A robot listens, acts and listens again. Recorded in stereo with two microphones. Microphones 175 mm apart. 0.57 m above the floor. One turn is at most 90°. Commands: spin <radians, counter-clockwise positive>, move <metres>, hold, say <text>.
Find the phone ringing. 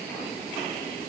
hold
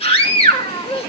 hold
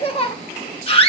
say I can't make out a phone ringing, only a scream.